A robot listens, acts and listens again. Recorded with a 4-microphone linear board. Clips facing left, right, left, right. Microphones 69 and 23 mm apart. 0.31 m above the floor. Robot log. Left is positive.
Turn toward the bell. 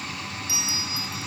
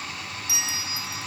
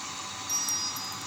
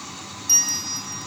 note: The bell: about 75° right or 105° right.
cmd yaw -75
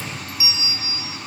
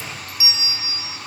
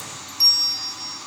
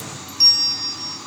note: So it is at 30° right.
cmd yaw -30
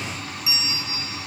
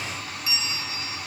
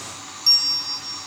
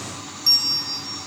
end: Facing the bell, 1 to 2 m away.